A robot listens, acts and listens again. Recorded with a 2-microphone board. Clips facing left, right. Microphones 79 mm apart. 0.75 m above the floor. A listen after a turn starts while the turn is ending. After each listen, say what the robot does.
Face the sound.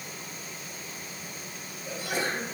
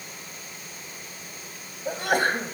Turn 70° right.
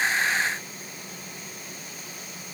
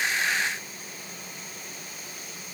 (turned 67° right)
Keep listening.
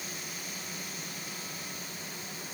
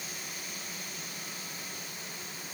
I heard a sneeze, but can't make it out now. It was about straight ahead or 45° right.